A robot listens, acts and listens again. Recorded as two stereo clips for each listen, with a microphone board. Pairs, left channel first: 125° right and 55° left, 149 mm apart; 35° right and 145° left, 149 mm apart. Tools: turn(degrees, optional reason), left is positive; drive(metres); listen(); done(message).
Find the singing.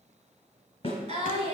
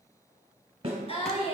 turn(degrees=15, reason="The singing: 15° left.")
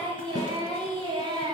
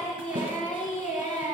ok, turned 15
done("Facing the singing, 1 to 2 m away.")